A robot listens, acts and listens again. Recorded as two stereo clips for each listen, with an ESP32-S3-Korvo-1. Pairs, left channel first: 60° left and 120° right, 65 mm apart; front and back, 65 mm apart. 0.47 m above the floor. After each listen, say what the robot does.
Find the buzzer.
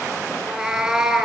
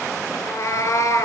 Keep listening.
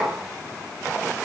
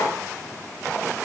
Keep listening.
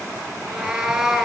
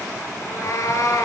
I can't make out a buzzer, only a cat meowing.